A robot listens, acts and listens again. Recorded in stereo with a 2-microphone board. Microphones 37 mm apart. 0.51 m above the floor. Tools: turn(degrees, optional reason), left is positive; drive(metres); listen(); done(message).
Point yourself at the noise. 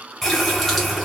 turn(degrees=30)
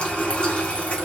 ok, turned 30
turn(degrees=140, reason="So it is at 140° left.")
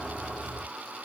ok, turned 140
done("Found it: a running tap, straight ahead.")